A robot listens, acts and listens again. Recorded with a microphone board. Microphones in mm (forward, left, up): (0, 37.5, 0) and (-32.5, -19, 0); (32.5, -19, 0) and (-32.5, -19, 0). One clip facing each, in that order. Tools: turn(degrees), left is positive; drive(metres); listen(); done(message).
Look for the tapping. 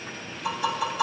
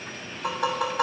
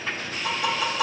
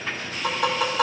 turn(degrees=-155)
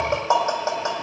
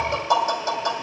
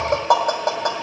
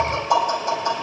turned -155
done("Found it: tapping, straight ahead.")